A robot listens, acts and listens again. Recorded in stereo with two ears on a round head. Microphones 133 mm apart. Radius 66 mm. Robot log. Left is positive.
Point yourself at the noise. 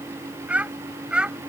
cmd yaw -30
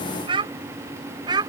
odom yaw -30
note: So it is at 150° right.
cmd yaw -150
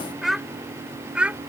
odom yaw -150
note: The child speaking is now 10° right.
cmd yaw -10
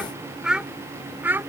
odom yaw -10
note: The child speaking is now 15° right.
cmd yaw -15
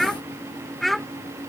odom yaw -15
end: Facing the child speaking.